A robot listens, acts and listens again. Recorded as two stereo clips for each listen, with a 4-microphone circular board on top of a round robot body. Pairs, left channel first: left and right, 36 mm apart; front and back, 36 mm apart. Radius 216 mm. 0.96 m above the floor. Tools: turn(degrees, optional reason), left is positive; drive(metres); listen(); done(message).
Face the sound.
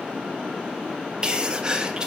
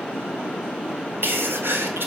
turn(degrees=-160, reason="The sneeze: 160° right.")
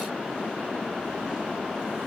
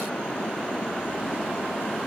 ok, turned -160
done("Facing where the sneeze came from. I can't hear it now.")